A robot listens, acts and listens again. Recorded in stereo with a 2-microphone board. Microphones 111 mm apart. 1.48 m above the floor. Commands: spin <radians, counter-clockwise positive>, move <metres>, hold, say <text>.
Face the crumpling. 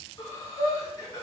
hold
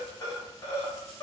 hold
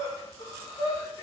say I can't make out crumpling to turn to.